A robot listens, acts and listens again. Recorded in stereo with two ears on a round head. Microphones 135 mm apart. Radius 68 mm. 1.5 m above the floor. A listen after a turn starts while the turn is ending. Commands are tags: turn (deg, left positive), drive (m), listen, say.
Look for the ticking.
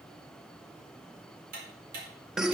<turn deg="-65"/>
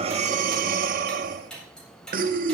<say>Facing the ticking.</say>